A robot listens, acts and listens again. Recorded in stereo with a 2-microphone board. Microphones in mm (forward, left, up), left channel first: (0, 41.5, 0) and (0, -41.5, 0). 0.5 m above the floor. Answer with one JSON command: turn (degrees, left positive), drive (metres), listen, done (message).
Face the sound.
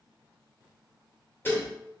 {"turn": 25}
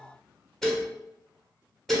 {"done": "Found it: dishes clattering, straight ahead, 1 to 2 m away."}